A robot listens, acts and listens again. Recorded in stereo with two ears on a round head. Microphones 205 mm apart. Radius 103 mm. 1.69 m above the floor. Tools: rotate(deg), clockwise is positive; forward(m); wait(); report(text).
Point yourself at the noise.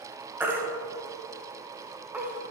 rotate(30)
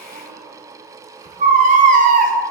rotate(135)
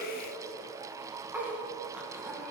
wait()
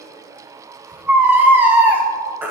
rotate(10)
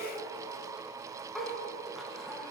wait()
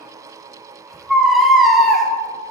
report("Found it: a baby crying, straight ahead, 1 to 2 m away.")